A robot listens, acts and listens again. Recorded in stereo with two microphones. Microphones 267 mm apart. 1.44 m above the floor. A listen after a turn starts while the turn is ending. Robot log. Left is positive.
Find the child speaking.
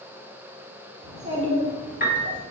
note: The child speaking: about 30° right or 150° right.
cmd yaw -30
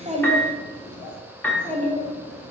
note: The child speaking: about 25° right or 155° right.
cmd yaw -25
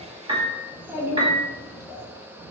note: So it is at 15° right.
cmd yaw -15
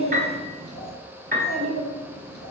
end: Facing the child speaking, 2 to 4 m away.